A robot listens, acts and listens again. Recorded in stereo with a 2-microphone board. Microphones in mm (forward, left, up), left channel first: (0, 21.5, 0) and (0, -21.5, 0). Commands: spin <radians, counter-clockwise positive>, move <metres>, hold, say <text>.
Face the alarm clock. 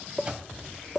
spin -0.44
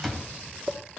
say Facing the alarm clock.